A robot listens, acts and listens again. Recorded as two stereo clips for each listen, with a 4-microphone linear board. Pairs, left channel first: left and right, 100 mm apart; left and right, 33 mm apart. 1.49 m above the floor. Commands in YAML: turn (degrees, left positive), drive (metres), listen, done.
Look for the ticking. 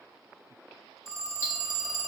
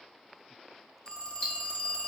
turn: 25
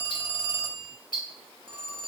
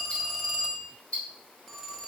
turn: 130
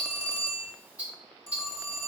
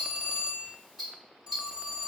turn: -15
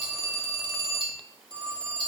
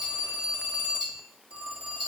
done: "Found it: ticking, straight ahead, 1 to 2 m away."